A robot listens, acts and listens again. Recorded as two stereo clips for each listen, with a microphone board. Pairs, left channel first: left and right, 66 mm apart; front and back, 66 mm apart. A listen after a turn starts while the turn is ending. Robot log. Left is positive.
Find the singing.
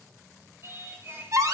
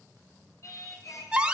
note: The singing: 30° right.
cmd yaw -30
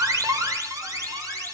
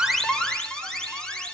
cmd idle
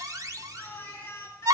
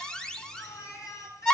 note: The singing is now 40° left.
cmd yaw +40
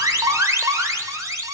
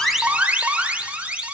cmd idle
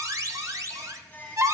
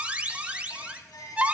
note: The singing is now 25° left.
cmd yaw +25
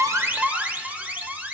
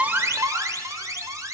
cmd idle
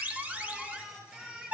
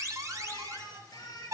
note: The singing is now 15° right.
cmd yaw -15
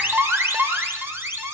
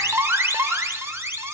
cmd idle
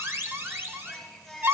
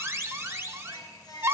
end: Found it: singing, straight ahead, 2 to 4 m away.